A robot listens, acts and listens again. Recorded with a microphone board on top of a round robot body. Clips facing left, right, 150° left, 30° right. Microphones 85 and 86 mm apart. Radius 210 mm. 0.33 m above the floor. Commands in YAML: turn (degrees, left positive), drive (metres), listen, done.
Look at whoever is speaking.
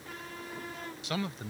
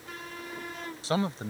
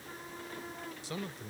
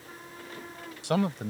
turn: -30
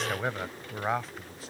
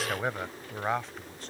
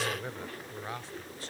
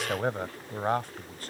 done: "Facing the man speaking."